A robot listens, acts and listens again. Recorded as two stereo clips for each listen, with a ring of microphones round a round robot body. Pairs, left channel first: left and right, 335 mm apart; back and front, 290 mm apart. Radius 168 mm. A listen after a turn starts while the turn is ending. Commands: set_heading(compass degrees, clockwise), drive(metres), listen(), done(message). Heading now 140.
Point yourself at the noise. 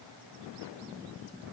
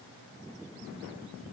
listen()
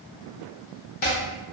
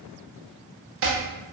set_heading(90)
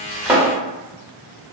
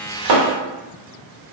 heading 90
set_heading(100)
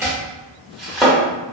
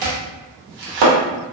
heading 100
done("Facing the chopping.")